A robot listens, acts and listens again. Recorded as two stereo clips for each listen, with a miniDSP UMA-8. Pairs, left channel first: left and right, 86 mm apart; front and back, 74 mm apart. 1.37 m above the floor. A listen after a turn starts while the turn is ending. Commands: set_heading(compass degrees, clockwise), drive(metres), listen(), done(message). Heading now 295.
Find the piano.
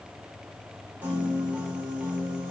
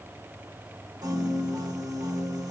set_heading(95)
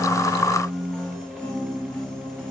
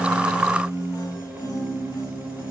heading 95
set_heading(85)
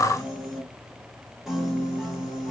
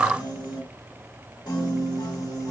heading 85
done("Found it: a piano, straight ahead.")